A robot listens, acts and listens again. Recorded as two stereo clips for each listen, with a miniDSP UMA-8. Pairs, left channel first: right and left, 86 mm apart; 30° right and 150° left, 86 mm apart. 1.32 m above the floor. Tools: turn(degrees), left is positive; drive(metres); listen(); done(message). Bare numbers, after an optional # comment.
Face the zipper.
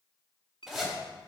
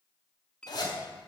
done("Facing the zipper.")